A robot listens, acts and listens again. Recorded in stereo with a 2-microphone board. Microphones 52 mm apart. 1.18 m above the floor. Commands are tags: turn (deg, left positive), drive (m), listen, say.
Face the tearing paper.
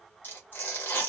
<turn deg="40"/>
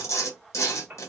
<turn deg="100"/>
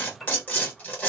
<turn deg="35"/>
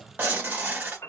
<turn deg="-35"/>
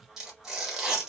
<turn deg="-10"/>
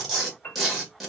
<say>Facing the tearing paper.</say>